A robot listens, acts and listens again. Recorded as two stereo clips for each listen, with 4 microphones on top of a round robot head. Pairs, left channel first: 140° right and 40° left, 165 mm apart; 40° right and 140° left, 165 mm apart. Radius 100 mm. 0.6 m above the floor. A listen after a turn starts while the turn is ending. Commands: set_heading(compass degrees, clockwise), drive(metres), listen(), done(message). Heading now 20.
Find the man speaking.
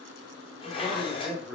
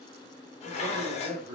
set_heading(260)
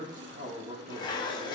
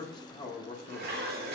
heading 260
done("Facing the man speaking.")